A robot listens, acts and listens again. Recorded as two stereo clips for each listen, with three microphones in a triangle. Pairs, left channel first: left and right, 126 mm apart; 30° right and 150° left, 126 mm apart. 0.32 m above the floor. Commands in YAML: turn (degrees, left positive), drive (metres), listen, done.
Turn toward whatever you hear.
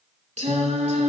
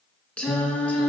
turn: -110
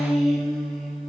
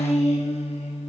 done: "Facing the singing, 2 to 4 m away."